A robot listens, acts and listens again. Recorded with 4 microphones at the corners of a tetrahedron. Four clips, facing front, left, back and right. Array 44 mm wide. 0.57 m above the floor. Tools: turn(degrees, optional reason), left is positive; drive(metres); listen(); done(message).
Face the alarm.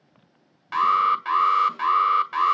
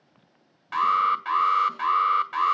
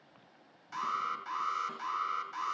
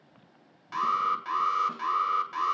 turn(degrees=20, reason="The alarm: 20° left.")
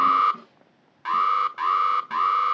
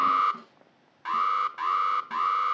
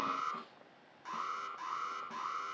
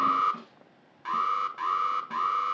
done("Facing the alarm, 1 to 2 m away.")